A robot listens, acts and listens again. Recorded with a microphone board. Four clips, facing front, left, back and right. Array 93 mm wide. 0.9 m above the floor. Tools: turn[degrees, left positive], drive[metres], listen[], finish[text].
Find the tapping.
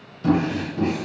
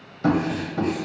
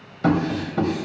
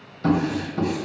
Thought: The tapping: 170° left.
Action: turn[170]
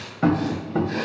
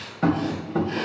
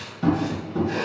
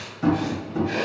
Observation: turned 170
Thought: The tapping is now 40° left.
Action: turn[40]
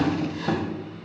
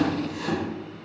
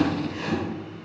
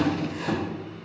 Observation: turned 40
Thought: The tapping is now 10° right.
Action: turn[-10]
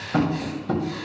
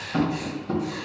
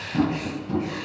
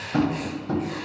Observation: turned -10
Action: finish[Found it: tapping, straight ahead, 1 to 2 m away.]